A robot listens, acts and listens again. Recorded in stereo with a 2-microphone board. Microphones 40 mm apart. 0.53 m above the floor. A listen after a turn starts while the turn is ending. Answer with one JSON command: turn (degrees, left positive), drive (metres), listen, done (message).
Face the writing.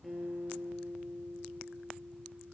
{"listen": true}
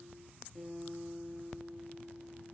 {"listen": true}
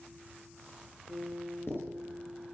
{"turn": 70}
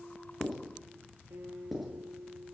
{"done": "Facing the writing."}